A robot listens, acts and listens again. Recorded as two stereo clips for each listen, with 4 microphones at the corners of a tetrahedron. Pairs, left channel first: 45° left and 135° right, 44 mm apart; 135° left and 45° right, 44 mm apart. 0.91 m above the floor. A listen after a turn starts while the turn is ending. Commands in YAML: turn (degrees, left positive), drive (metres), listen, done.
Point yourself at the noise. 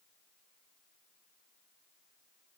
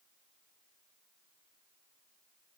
listen: true
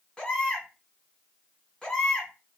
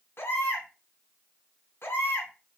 turn: 115
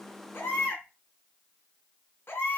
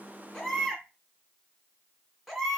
turn: 45
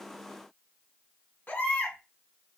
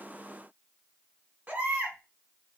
done: "Found it: a baby crying, straight ahead."